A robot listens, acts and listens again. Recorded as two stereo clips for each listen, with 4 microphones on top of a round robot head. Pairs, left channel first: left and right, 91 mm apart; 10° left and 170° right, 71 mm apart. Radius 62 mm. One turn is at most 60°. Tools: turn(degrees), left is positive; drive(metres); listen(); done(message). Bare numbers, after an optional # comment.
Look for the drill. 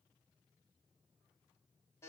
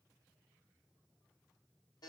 listen()
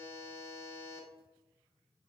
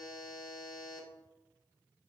listen()
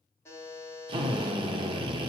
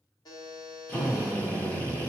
# The drill: 60° right.
turn(-60)
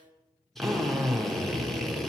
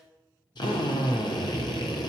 done("Facing the drill, under 1 m away.")